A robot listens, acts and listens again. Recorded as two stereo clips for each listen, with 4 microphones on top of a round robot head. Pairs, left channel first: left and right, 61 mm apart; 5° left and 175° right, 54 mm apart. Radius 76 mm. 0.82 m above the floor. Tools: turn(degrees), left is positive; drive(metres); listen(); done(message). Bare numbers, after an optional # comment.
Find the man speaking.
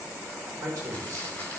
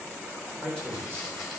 # The man speaking: 65° right.
turn(-65)
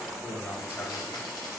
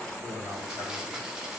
# The man speaking is now 35° left.
turn(35)
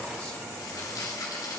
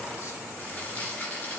listen()
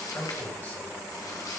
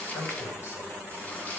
listen()
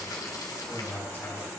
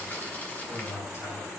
# The man speaking is now 30° left.
turn(30)
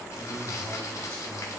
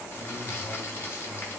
listen()
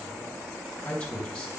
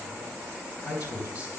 # The man speaking is now 15° left.
turn(15)
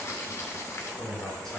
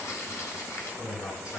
done("Facing the man speaking, 2 to 4 m away.")